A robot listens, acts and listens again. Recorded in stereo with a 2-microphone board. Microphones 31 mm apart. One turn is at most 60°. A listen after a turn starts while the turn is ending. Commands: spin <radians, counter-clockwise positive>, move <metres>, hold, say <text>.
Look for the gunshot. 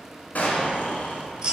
spin 1.05
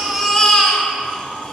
hold
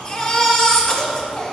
say I heard a gunshot, but can't make it out now. It was about 5° left or 55° left.